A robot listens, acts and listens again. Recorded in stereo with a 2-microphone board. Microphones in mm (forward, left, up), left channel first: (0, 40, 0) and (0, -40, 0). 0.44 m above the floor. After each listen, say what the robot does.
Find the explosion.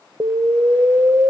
Turn 65° right.
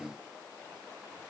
Keep listening.
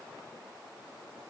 I heard an explosion, but can't make it out now. It was about straight ahead or 50° right.